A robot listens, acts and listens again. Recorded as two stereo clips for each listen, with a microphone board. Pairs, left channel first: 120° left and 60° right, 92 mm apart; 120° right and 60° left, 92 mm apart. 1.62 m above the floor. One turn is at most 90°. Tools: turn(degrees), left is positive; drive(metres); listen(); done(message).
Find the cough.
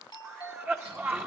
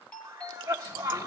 done("Found it: a cough, straight ahead.")